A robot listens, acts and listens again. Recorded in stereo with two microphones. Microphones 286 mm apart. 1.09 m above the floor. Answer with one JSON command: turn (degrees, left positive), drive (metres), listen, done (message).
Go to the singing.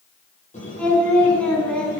{"turn": 30}
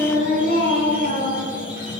{"turn": 145}
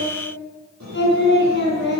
{"turn": 40}
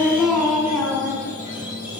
{"drive": 1.0}
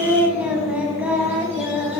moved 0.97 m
{"drive": 1.0}
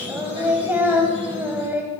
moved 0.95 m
{"drive": 1.0}
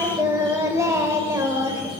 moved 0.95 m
{"turn": -10}
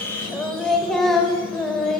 {"drive": 1.0}
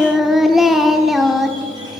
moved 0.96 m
{"drive": 1.0}
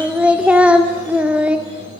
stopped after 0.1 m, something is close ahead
{"done": "Arrived at the singing, straight ahead."}